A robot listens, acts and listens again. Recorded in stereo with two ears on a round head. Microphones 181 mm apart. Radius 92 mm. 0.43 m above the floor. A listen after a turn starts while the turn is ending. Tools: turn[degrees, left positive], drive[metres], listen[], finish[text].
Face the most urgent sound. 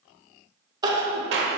Thought: The crying: about 20° right or 160° right.
Action: turn[-20]
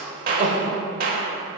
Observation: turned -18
Thought: So it is at 140° right.
Action: turn[-140]
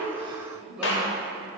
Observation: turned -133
Thought: Nothing new. It was at 10° right.
Action: turn[-10]
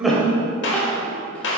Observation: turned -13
Thought: The crying is now 10° left.
Action: turn[10]
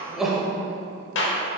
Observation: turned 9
Action: finish[Facing the crying, under 1 m away.]